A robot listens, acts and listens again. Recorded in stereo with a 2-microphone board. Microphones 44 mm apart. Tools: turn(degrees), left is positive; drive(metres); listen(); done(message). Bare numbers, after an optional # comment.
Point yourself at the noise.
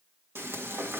# The frying: about 65° right or 115° right.
turn(-65)
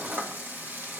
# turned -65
# So it is at 50° right.
turn(-50)
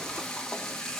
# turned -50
# The frying is now 15° left.
turn(15)
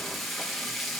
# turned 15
done("Found it: frying, straight ahead, 1 to 2 m away.")